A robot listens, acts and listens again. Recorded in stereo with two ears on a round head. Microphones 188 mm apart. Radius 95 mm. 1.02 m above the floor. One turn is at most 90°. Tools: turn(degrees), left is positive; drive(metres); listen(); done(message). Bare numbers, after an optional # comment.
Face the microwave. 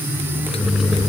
# The microwave: about 25° left or 155° left.
turn(25)
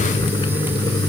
listen()
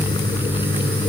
done("Facing the microwave.")